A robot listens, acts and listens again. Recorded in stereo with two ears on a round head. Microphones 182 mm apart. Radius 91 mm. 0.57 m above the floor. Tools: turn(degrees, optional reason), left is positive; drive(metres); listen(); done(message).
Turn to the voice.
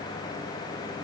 listen()
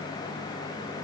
listen()
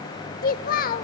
turn(degrees=45, reason="The child speaking: about 45° left or 135° left.")
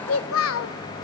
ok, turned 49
turn(degrees=85, reason="So it is at 85° left.")
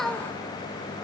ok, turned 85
done("Found it: a child speaking, straight ahead, under 1 m away.")